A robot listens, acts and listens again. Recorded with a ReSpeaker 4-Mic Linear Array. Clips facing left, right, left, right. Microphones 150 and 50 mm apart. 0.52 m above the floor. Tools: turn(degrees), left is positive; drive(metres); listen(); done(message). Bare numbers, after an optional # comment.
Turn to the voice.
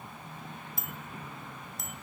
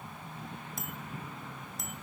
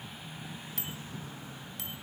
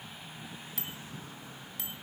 listen()
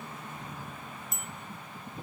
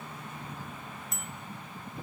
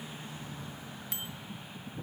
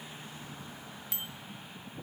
listen()
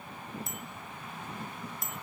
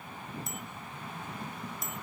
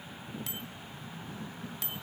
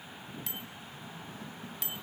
done("I can't make out anyone speaking, only a bicycle bell.")